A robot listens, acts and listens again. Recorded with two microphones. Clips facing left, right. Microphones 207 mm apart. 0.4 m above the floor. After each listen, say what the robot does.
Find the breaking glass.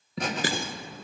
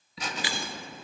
Turn 50° left.
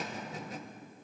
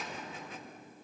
Keep listening.
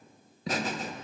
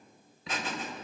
I heard breaking glass, but can't make it out now. It was about straight ahead or 80° left.